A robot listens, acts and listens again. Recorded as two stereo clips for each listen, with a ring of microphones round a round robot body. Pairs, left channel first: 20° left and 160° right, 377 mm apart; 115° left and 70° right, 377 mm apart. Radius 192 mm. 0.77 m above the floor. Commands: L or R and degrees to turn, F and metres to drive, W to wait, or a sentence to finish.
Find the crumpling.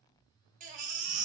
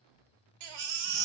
W
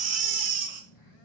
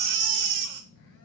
W
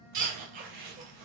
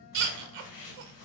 L140
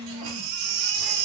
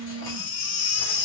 W
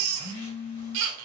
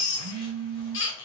W
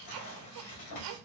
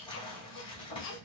L40
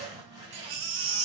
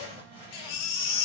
L10
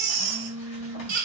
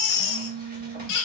W
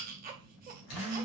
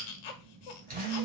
W
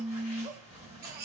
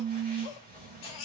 Found it: crumpling, straight ahead.